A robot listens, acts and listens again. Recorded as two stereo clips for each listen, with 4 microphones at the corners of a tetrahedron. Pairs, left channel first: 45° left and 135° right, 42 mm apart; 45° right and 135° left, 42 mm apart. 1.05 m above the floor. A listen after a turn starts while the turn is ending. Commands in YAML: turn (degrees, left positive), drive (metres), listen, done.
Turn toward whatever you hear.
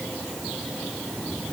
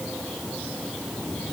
listen: true
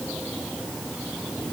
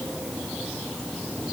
listen: true
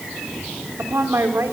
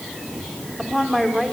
turn: -130
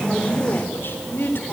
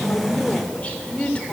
turn: 15
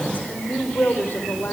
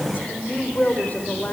done: "Found it: a woman speaking, straight ahead."